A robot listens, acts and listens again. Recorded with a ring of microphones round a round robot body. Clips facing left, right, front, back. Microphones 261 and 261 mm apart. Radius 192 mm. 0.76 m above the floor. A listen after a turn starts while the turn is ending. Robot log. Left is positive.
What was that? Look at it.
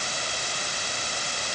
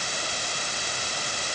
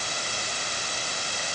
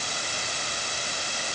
cmd idle
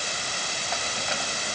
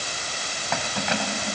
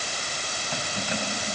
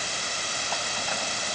note: The keys jangling: 75° right.
cmd yaw -75
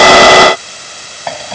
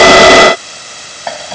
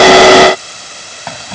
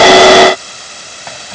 end: Facing the keys jangling.